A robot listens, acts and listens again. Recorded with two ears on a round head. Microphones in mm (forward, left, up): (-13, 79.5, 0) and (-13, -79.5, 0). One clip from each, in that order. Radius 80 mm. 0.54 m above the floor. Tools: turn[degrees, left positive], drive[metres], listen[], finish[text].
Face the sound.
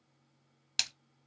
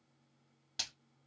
Thought: The splash: about 65° left or 115° left.
Action: turn[65]
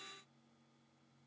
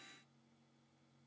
Action: listen[]
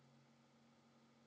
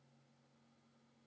Action: finish[I heard a splash, but can't make it out now. It was about straight ahead or 50° left.]